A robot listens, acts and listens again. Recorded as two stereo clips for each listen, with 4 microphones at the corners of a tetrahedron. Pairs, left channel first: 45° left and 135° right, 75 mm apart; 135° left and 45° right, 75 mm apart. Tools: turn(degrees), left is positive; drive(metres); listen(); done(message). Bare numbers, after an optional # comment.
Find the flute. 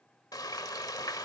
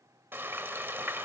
listen()
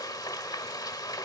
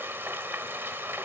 listen()
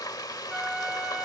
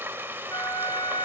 # The flute: 140° left.
turn(140)
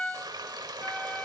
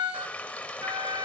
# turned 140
# The flute is now 30° right.
turn(-30)
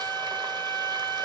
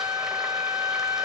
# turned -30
done("Facing the flute.")